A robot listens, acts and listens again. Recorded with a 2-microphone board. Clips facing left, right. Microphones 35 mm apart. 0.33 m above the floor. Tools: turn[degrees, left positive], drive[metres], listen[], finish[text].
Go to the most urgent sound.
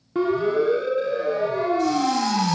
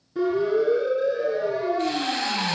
Thought: The siren: about 55° left or 125° left.
Action: turn[55]
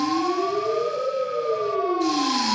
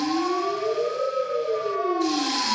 Thought: So it is at 15° left.
Action: turn[15]
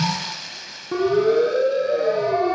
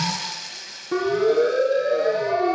Action: drive[1.0]
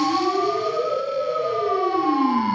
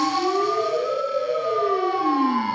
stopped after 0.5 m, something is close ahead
Action: finish[Something is in my way. I am facing the siren but have not reached it.]